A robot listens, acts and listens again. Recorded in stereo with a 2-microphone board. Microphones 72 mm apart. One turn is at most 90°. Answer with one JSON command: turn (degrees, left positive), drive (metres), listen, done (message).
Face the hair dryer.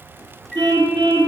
{"listen": true}
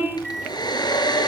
{"turn": 75}
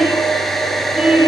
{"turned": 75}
{"done": "Facing the hair dryer."}